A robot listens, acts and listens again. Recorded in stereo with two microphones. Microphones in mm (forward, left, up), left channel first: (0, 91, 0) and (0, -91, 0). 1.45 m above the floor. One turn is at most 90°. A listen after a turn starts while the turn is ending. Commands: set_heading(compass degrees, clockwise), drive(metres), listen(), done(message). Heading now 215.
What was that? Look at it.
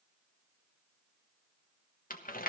set_heading(165)
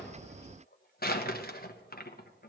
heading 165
set_heading(95)
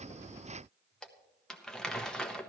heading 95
done("Found it: crumpling, straight ahead.")